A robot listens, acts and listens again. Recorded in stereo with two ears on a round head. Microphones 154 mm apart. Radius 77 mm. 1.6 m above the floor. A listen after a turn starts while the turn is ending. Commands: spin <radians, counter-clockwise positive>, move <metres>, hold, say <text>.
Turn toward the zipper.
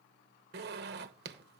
spin -1.13
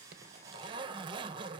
spin -0.52
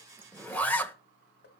spin 0.17
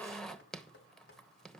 say Facing the zipper, 1 to 2 m away.